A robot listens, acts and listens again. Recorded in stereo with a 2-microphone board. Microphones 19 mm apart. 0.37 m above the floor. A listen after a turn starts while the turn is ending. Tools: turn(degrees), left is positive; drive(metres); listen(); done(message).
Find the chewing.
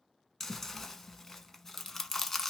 turn(degrees=30)
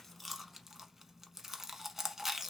turn(degrees=-20)
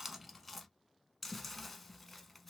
done("Facing the chewing, under 1 m away.")